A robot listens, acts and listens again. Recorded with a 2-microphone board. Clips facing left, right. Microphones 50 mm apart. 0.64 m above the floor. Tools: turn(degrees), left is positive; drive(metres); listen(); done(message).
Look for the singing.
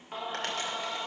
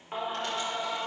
turn(degrees=-30)
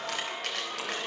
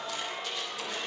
turn(degrees=15)
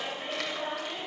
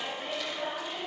done("Found it: singing, straight ahead, 2 to 4 m away.")